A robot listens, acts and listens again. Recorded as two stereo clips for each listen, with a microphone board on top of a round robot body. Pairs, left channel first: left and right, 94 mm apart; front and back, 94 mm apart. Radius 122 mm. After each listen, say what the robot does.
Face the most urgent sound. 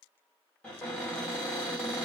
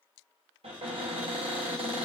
Keep listening.
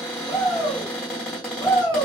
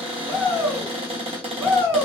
Turn 130° left.
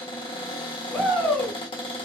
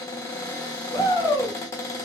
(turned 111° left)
Turn 20° left.
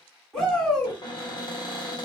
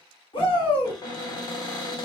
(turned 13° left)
Found it: a shout, straight ahead, 1 to 2 m away.